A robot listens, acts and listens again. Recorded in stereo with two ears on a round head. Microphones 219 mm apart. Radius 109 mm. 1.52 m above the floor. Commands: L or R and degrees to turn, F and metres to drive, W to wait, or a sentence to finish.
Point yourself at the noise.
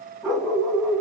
L30
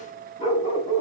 L160
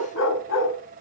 L55
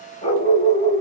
L30
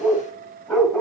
Facing the dog barking, 2 to 4 m away.